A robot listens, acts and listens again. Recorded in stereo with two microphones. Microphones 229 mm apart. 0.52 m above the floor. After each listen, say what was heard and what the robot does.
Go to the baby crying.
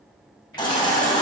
The baby crying: about 20° left or 160° left. Turn 20° left.
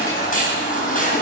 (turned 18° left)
So it is at 145° left. Turn 145° left.
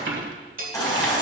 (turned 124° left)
The baby crying is now 20° left. Turn 20° left.
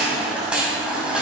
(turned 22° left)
Drive 1.0 m forward.
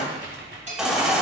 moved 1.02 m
Drive 1.0 m forward.
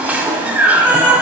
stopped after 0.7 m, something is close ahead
Arrived at the baby crying, straight ahead.